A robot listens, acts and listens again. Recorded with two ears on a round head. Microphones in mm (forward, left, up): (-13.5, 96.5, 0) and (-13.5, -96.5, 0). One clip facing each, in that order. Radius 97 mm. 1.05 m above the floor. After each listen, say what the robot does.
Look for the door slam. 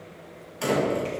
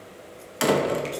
Turn 90° right.
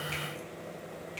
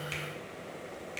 I heard a door slam from this way, but can't make it out now.